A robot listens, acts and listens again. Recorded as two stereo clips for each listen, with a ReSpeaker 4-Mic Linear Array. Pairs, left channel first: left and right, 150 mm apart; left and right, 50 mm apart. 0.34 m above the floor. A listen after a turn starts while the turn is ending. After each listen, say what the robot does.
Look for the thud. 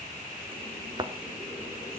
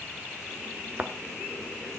Turn 30° right.
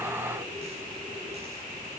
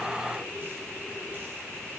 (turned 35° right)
Keep listening.
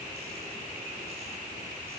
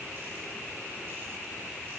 I heard a thud, but can't make it out now. It was about 5° left or 115° right.